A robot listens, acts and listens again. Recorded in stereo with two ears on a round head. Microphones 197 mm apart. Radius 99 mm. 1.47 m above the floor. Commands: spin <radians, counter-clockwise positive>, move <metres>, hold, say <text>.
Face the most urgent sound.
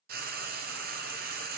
hold
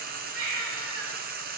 spin -1.31
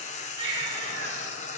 spin -0.44
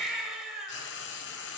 say Facing the baby crying, 2 to 4 m away.